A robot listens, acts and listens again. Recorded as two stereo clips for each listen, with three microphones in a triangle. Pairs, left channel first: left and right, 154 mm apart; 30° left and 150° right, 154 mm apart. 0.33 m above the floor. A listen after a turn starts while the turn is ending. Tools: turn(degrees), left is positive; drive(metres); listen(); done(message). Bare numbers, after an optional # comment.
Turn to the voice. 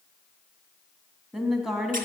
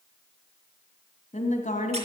done("Facing the woman speaking.")